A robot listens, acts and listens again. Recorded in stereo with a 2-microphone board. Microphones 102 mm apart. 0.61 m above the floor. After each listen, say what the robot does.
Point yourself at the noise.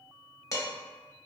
Turn 30° left.
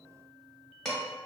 Found it: dishes clattering, straight ahead.